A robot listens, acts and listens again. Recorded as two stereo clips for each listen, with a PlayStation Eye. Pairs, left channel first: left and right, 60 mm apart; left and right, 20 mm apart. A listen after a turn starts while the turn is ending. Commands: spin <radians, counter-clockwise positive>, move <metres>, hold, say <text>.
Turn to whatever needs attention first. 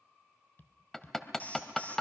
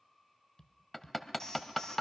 spin 0.52
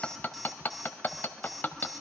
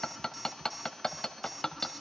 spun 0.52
say Found it: an alarm, straight ahead.